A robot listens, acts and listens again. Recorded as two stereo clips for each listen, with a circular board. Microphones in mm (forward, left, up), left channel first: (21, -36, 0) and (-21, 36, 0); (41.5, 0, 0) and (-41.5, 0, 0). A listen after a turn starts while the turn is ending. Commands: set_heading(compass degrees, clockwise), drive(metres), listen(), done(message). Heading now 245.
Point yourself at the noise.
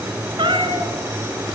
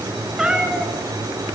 set_heading(145)
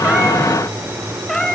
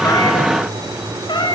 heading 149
set_heading(124)
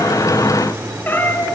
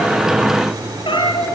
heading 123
done("Facing the cat meowing, over 4 m away.")